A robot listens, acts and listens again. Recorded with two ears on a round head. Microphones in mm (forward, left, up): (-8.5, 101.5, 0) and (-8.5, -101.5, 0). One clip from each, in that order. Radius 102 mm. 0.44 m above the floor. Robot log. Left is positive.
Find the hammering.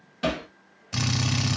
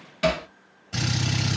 note: The hammering: about 25° right or 155° right.
cmd yaw -25
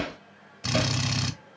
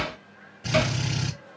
note: So it is at 130° right.
cmd yaw -130
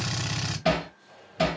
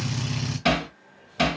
note: The hammering is now 35° right.
cmd yaw -35
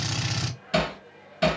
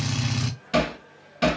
note: The hammering is now 10° right.
cmd yaw -10
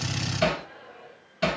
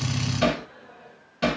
end: Found it: hammering, straight ahead.